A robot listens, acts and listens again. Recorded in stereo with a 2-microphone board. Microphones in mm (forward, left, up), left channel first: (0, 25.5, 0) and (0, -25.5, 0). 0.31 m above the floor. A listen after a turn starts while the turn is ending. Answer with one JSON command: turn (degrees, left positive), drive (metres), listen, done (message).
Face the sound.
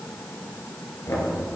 {"turn": 90}
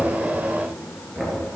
{"done": "Facing the knocking."}